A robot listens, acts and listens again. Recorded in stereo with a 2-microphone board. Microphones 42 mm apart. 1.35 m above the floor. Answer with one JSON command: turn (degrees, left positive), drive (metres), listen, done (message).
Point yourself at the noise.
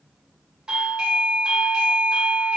{"turn": -20}
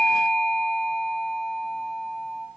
{"turn": -140}
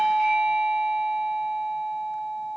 {"turn": 15}
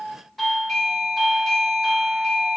{"done": "Facing the doorbell, 1 to 2 m away."}